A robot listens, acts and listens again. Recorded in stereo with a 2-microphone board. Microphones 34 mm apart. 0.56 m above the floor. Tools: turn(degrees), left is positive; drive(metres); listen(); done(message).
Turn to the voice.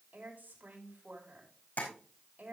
turn(degrees=-70)
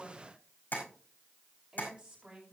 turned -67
turn(degrees=-40)
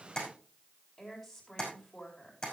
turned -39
done("Found it: a woman speaking, straight ahead, over 4 m away.")